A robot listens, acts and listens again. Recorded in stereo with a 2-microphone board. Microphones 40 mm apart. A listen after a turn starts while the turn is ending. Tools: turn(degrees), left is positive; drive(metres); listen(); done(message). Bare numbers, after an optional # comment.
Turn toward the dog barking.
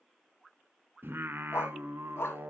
turn(90)
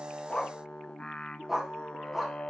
# So it is at 10° right.
turn(-10)
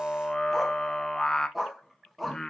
done("Facing the dog barking, 1 to 2 m away.")